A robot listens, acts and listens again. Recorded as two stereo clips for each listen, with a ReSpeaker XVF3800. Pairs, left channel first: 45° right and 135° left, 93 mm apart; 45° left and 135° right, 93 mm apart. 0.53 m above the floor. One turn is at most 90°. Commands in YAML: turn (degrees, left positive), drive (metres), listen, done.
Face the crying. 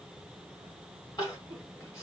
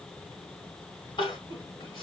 turn: 10
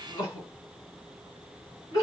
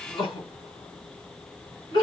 done: "Facing the crying."